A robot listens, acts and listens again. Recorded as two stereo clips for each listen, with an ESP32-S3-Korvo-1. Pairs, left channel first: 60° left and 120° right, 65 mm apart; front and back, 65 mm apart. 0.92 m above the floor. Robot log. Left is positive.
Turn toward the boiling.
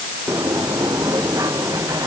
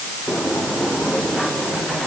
cmd idle
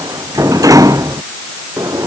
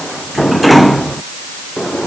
cmd idle
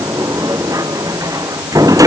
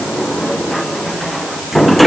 end: I can't make out boiling to turn to.